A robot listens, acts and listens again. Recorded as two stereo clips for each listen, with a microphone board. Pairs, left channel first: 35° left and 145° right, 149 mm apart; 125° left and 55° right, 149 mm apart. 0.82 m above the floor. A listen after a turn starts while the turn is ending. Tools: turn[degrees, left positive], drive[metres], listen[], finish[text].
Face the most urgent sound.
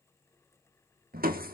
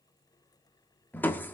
Action: listen[]
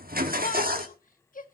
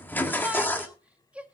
Thought: The shout: 25° left.
Action: turn[25]
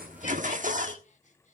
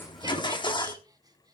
Action: listen[]
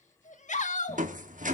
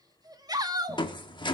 Action: finish[Facing the shout.]